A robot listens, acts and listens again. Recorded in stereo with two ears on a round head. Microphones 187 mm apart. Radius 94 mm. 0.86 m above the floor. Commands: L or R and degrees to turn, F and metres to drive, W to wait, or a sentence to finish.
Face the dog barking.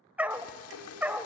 R30
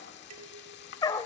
L20
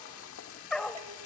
Facing the dog barking, 1 to 2 m away.